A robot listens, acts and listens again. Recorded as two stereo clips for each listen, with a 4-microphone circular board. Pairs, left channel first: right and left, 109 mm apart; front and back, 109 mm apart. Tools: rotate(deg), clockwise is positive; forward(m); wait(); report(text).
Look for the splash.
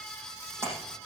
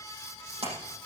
rotate(-155)
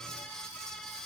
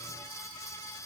report("Facing where the splash came from. I can't hear it now.")